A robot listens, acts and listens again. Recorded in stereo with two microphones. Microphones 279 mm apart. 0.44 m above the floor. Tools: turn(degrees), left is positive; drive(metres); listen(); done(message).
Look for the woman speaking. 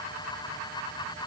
listen()
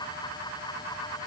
listen()
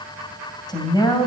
turn(degrees=15)
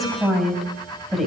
done("Facing the woman speaking, 2 to 4 m away.")